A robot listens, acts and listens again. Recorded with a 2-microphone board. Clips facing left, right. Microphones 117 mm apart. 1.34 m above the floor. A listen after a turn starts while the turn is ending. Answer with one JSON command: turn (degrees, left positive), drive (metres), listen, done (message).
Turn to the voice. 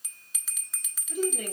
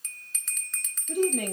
{"turn": -65}
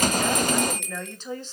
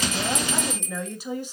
{"turn": -15}
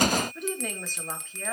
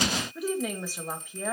{"turn": -15}
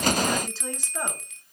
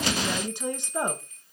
{"turn": -20}
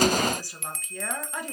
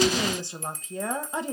{"turn": -25}
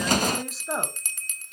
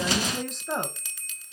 {"done": "Facing the woman speaking, 1 to 2 m away."}